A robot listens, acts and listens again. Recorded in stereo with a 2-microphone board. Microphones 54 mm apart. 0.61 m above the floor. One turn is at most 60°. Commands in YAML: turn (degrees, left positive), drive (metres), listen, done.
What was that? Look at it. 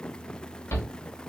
turn: 60
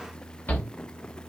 turn: 40
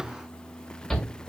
done: "Facing the shout, 1 to 2 m away."